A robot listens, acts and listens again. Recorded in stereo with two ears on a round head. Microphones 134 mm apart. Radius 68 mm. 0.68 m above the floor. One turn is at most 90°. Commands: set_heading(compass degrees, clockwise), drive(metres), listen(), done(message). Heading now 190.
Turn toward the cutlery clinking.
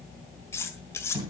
set_heading(175)
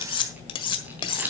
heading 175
set_heading(85)
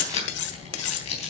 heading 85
set_heading(355)
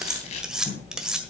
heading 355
done("Facing the cutlery clinking.")